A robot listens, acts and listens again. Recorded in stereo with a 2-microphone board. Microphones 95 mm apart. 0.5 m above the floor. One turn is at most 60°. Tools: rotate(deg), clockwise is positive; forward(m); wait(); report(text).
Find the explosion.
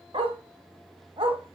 wait()
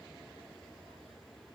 wait()
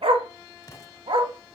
rotate(-40)
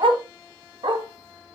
wait()
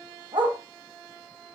report("I heard an explosion, but can't make it out now. It was about straight ahead or 100° left.")